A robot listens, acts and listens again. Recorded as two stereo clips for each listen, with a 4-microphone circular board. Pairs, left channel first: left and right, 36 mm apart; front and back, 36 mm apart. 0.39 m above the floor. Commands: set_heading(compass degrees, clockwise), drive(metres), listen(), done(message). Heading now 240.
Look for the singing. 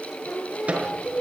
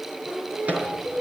set_heading(115)
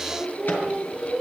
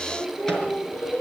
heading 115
done("Found it: singing, straight ahead, over 4 m away.")